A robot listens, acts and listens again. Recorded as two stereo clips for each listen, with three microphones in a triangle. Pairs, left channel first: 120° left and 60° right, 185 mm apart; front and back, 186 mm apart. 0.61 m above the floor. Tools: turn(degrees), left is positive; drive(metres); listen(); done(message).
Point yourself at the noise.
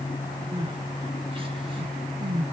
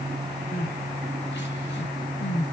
done("Facing the crying, 1 to 2 m away.")